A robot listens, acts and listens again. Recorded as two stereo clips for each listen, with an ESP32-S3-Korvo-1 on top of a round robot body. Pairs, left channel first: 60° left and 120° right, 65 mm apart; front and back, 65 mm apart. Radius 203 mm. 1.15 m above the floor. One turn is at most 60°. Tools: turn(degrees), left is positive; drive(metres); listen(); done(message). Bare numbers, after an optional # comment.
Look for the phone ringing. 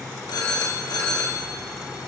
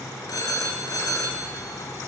# The phone ringing: 40° left.
turn(40)
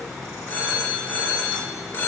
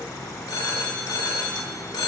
done("Found it: a phone ringing, straight ahead.")